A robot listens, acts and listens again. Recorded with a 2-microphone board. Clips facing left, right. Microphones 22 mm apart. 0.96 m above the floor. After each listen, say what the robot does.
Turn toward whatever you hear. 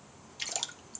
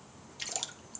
Turn 30° left.
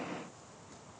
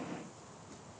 Keep listening.
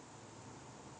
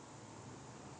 I heard a splash, but can't make it out now. It was about 20° right or 140° left.